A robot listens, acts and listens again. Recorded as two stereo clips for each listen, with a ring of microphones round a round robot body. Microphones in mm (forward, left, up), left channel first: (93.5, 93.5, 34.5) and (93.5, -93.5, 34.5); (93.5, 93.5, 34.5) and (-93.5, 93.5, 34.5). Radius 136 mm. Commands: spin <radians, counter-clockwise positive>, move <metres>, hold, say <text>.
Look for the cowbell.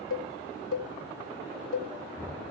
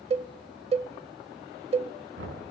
spin 2.09
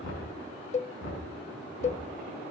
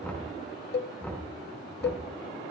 spin 0.61
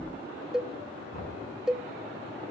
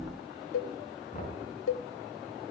say Facing the cowbell, under 1 m away.